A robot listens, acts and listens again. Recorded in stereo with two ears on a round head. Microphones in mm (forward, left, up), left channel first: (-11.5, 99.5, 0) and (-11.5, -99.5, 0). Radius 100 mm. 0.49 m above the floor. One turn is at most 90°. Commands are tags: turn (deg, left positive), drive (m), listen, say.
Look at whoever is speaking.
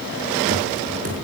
<listen/>
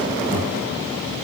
<listen/>
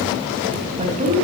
<turn deg="-30"/>
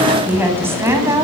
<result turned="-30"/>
<turn deg="-15"/>
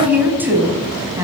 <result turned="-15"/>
<turn deg="-15"/>
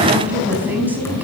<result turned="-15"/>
<turn deg="-10"/>
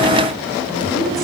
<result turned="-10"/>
<listen/>
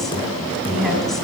<listen/>
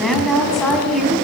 <say>Facing the woman speaking, over 4 m away.</say>